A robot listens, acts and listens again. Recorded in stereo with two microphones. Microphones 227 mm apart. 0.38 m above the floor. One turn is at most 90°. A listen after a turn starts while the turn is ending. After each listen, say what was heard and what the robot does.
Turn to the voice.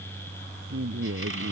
The woman speaking: about 70° right or 110° right. Turn 70° right.
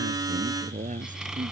So it is at 35° right. Turn 35° right.
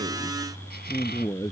The woman speaking is now 15° left. Turn 15° left.
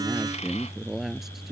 Found it: a woman speaking, straight ahead.